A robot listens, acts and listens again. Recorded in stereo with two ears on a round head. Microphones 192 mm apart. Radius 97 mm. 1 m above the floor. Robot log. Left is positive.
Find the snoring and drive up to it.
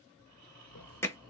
cmd yaw +30
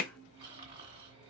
note: So it is at 25° right.
cmd yaw -25
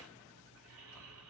cmd fwd 1.0
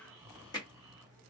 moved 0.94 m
note: The snoring is now 15° right.
cmd yaw -15
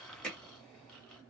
cmd fwd 1.0
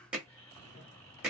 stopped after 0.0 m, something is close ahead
note: The snoring is now 10° left.
cmd yaw +10
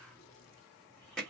cmd idle
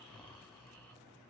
end: I am next to the snoring.